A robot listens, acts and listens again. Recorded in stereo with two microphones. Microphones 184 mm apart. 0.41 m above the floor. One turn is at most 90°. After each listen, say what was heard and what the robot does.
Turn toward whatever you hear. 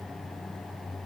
Keep listening.
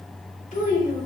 The child speaking: about 50° left or 130° left. Turn 50° left.
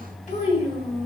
So it is at 30° left. Turn 30° left.
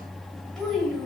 Facing the child speaking, 1 to 2 m away.